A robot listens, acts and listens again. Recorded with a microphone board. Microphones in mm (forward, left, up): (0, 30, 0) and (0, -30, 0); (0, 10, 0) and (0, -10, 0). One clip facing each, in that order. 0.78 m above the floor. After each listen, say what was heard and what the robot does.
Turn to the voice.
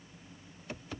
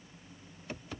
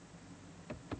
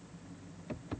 Keep listening.
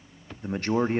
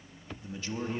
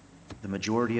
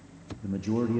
The man speaking: about 55° left or 125° left. Turn 55° left.
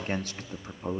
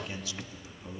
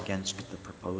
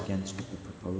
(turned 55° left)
So it is at 55° left. Turn 55° left.
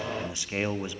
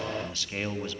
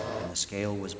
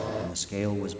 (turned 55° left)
The man speaking is now 20° left. Turn 20° left.
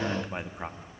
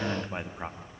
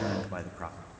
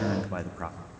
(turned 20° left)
Found it: a man speaking, straight ahead.